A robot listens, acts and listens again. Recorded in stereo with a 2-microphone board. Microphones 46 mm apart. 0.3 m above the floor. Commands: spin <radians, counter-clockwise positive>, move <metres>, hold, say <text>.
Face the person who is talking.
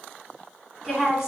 spin -0.52
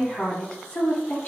spin 0.52
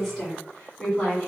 spin 0.26
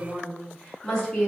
spin 0.17
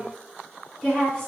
say Facing the woman speaking.